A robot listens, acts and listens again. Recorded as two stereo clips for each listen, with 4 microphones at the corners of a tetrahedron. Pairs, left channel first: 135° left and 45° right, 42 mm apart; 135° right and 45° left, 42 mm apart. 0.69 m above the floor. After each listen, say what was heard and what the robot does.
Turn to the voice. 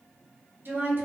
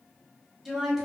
The woman speaking: 30° right. Turn 30° right.
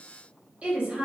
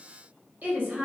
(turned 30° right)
The woman speaking is now 10° left. Turn 10° left.
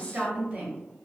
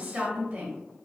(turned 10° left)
Found it: a woman speaking, straight ahead.